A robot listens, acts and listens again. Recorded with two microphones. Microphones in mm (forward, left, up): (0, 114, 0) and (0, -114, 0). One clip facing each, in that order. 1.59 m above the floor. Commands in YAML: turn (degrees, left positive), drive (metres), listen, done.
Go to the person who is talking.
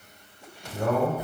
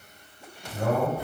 turn: -40
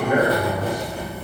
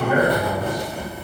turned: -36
turn: -105
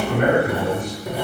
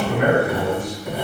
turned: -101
drive: 1.0
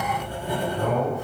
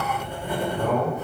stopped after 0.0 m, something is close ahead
done: "Blocked. The man speaking is further on, straight ahead."